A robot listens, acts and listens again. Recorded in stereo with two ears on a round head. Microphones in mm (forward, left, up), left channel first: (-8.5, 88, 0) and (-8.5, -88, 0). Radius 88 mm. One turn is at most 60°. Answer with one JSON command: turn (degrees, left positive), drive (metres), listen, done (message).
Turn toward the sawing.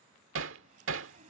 {"turn": -40}
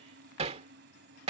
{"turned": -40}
{"turn": -60}
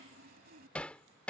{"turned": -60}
{"turn": -60}
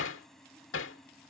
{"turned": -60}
{"done": "Facing the sawing."}